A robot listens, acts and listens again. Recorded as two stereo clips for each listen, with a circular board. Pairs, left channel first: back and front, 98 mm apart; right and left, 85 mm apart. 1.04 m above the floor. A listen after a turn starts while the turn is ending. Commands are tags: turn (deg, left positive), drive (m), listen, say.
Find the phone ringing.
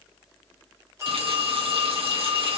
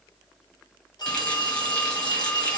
<turn deg="-60"/>
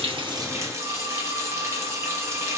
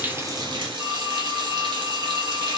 <turn deg="15"/>
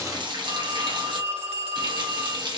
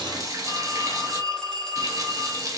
<say>Facing the phone ringing, 1 to 2 m away.</say>